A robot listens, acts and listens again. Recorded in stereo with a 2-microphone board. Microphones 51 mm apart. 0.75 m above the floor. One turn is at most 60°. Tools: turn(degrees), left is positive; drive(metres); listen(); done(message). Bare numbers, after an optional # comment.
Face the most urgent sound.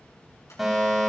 turn(-30)
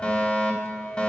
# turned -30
# So it is at 25° left.
turn(25)
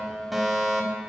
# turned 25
done("Found it: a fire alarm, straight ahead.")